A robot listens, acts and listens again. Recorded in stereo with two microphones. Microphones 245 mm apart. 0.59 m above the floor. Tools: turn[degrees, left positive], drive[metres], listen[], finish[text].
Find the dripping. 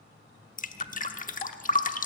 Thought: The dripping: about 35° left or 145° left.
Action: turn[35]
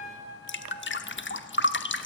Thought: So it is at 105° left.
Action: turn[105]
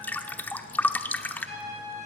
Thought: The dripping is now 10° left.
Action: turn[10]
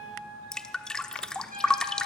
Action: finish[Facing the dripping, 1 to 2 m away.]